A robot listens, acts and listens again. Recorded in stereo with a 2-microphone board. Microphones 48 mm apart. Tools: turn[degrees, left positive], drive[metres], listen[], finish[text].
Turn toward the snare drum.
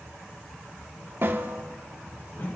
Thought: The snare drum: about 55° right or 125° right.
Action: turn[-55]
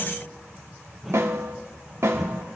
Thought: So it is at 70° right.
Action: turn[-70]
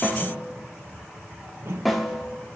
Action: finish[Found it: a snare drum, straight ahead.]